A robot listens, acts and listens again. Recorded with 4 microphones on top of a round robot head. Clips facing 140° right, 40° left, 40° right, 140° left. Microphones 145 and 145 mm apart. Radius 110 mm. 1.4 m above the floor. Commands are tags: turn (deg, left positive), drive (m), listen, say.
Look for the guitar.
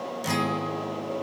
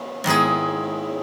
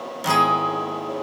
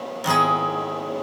<turn deg="50"/>
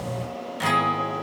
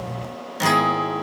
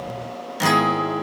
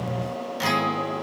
<say>Found it: a guitar, straight ahead.</say>